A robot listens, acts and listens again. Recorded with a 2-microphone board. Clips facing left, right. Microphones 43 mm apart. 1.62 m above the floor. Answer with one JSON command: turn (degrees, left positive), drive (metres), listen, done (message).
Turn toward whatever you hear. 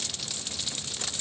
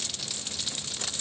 {"listen": true}
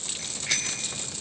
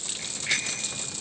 {"turn": -30}
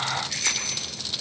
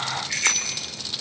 {"turn": -140}
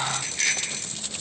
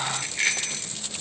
{"turn": -20}
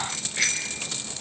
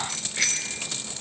{"done": "Facing the bicycle bell."}